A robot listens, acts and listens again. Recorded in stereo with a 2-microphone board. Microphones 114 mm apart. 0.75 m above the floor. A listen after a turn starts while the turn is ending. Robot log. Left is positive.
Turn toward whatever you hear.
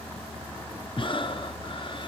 note: The breathing: about 45° left or 135° left.
cmd yaw +45
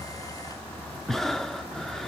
end: Facing the breathing.